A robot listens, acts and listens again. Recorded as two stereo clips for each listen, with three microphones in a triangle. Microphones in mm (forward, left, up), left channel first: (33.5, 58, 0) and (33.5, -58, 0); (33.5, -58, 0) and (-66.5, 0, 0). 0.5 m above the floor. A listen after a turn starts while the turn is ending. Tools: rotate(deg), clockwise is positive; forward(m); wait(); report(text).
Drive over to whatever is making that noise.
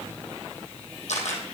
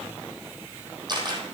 rotate(-100)
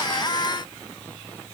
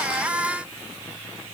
wait()
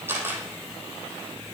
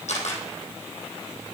rotate(20)
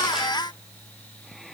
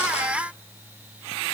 wait()
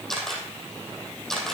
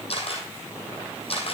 forward(1.0)
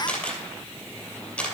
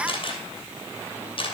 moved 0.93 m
rotate(-10)
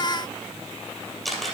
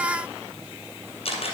forward(1.0)
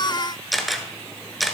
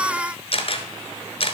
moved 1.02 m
forward(1.0)
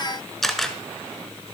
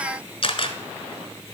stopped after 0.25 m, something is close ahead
report("Arrived at the camera shutter, straight ahead.")